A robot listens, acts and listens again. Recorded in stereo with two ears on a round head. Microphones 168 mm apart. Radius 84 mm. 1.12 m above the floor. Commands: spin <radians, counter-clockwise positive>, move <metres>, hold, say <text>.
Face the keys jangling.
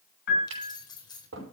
spin 0.44
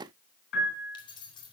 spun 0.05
spin 0.44
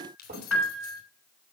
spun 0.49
spin 2.18
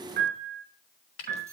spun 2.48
spin -0.26
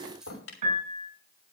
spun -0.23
say Facing the keys jangling.